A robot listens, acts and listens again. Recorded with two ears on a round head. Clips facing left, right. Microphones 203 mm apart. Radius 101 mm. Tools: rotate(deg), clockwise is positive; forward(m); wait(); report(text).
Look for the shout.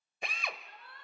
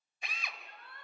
rotate(45)
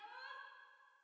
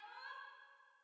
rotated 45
report("Found it: a shout, straight ahead.")